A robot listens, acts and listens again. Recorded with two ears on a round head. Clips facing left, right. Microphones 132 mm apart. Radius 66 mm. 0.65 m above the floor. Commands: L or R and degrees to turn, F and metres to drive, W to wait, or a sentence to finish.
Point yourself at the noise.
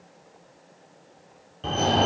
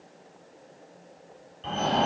L60
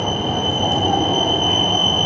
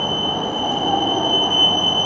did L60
L25
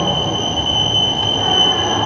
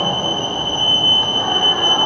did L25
L25
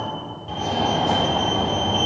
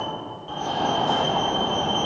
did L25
L20
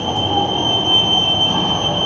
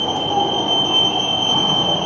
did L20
Found it: a fire alarm, straight ahead.